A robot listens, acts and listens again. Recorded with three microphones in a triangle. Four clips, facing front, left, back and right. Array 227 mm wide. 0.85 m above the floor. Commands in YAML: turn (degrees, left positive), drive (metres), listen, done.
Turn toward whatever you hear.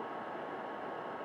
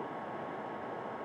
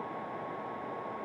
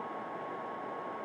listen: true
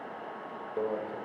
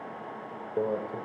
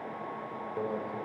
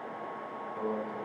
turn: 75
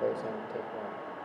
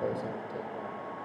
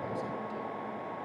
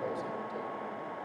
turn: 20
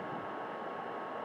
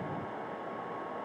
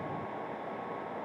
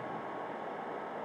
listen: true
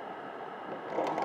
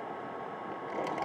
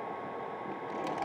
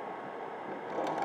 done: "Found it: a microwave, straight ahead, 2 to 4 m away."